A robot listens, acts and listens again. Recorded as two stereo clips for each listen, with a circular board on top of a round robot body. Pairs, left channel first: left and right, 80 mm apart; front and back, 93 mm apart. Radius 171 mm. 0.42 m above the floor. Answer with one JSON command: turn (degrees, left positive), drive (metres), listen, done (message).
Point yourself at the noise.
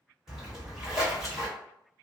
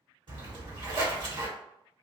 {"turn": -170}
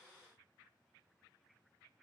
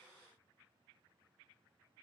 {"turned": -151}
{"turn": -20}
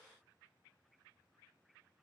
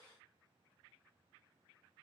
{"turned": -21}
{"done": "Facing where the splash came from. I can't hear it now."}